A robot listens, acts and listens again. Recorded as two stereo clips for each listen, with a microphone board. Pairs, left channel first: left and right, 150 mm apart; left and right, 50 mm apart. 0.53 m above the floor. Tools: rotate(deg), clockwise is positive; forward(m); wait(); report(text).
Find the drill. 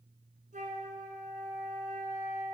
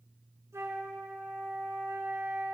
wait()
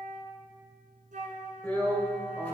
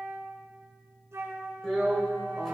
rotate(-30)
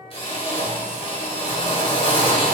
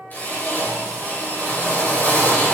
rotate(-140)
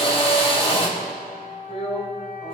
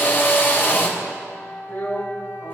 rotate(-45)
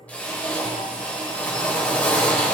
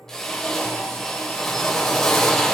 rotate(-10)
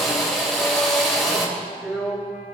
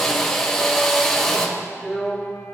report("Found it: a drill, straight ahead.")